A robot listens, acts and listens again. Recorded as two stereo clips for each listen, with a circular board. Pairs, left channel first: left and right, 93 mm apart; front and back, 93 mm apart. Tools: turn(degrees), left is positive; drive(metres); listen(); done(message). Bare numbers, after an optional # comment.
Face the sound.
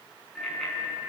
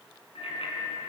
done("Facing the bicycle bell.")